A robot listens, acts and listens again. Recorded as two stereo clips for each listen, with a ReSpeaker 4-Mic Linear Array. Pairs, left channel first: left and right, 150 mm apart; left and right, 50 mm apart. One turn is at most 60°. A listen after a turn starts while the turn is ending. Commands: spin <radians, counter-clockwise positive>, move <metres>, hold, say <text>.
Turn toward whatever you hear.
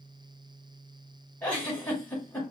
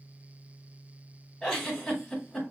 spin 0.52
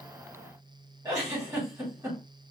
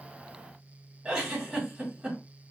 spin -0.35
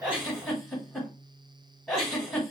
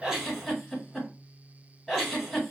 say Found it: a giggle, straight ahead.